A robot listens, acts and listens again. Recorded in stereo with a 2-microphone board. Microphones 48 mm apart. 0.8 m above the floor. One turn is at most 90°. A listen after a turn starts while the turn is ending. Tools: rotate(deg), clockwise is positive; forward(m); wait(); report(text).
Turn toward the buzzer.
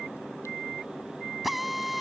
wait()
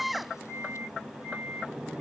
wait()
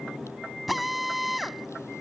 report("I can't make out a buzzer to turn to.")